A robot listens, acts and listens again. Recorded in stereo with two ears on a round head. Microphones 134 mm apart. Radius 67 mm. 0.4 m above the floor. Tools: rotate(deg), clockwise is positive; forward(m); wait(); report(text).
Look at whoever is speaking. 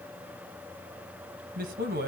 rotate(65)
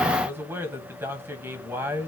rotate(15)
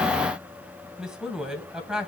report("Found it: a man speaking, straight ahead, 1 to 2 m away.")